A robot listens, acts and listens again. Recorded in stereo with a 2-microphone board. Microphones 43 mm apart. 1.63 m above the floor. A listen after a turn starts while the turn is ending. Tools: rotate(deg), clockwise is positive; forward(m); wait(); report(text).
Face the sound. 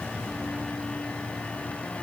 wait()
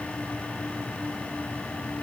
wait()
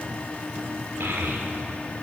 rotate(70)
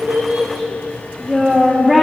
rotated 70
rotate(10)
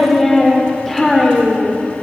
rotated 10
report("Found it: a child speaking, straight ahead.")